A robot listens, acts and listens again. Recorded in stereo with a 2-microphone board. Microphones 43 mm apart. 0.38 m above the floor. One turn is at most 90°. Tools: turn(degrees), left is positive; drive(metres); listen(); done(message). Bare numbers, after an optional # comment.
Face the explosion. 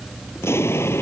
turn(90)
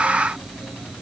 done("Facing where the explosion came from. I can't hear it now.")